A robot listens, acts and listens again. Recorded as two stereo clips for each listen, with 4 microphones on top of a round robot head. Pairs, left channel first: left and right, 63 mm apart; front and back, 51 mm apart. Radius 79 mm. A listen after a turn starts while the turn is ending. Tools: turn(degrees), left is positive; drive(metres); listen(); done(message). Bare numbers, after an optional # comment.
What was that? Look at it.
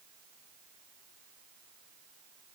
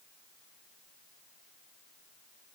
listen()
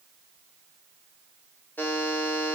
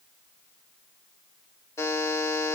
# The buzzer: 25° left.
turn(25)
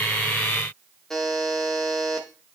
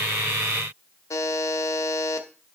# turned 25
done("Facing the buzzer.")